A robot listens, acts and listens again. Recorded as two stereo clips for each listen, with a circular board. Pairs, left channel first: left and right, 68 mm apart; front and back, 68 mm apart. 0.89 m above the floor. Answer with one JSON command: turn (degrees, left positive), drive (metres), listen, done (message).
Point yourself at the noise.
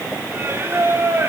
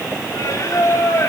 {"turn": -40}
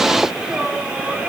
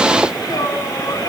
{"turn": -15}
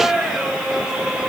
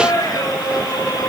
{"turn": -10}
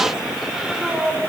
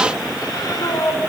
{"turn": -10}
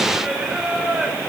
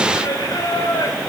{"turn": -10}
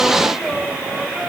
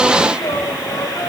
{"done": "Facing the singing."}